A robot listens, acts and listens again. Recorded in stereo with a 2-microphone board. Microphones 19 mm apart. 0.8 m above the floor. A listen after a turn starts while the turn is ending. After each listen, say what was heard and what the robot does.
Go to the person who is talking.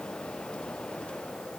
Keep listening.
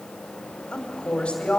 The woman speaking: about 70° left or 110° left. Turn 70° left.
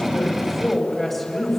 Drive 1.0 m forward.
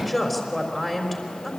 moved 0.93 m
Drive 1.0 m forward.
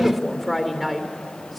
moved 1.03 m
Drive 1.0 m forward.
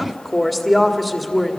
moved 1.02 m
The woman speaking is now 10° right. Turn 10° right.
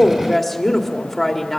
Drive 1.0 m forward.
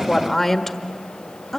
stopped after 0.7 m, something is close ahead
Arrived at the woman speaking, straight ahead.